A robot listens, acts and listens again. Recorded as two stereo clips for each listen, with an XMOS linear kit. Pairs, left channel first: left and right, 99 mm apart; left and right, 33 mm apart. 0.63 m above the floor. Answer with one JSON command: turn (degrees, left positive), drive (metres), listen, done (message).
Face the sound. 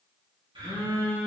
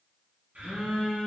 {"turn": -60}
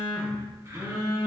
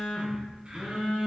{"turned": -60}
{"turn": -40}
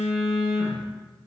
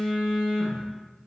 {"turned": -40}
{"turn": -15}
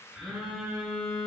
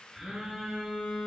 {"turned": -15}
{"done": "Found it: a phone buzzing, straight ahead, 1 to 2 m away."}